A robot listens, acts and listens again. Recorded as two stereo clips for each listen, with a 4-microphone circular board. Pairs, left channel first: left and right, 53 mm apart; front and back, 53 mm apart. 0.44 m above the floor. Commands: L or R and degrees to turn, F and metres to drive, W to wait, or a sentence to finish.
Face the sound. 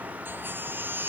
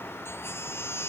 R40
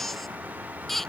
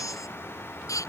Facing the baby crying.